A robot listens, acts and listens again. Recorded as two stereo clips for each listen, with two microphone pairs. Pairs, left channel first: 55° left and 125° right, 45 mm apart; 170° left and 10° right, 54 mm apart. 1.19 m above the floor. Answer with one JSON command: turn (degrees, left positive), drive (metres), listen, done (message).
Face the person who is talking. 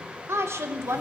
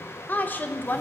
{"turn": -130}
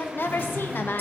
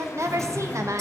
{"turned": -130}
{"turn": 15}
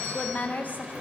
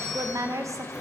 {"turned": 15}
{"done": "Facing the woman speaking."}